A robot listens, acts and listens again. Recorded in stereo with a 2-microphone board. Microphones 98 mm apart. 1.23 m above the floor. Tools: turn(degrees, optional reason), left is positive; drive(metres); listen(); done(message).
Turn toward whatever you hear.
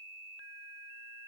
listen()
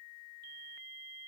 listen()
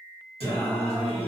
turn(degrees=90)
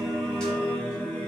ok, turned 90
turn(degrees=20, reason="So it is at 20° left.")
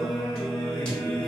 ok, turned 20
turn(degrees=15, reason="The singing is now 15° left.")
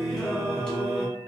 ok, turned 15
done("Found it: singing, straight ahead, 1 to 2 m away.")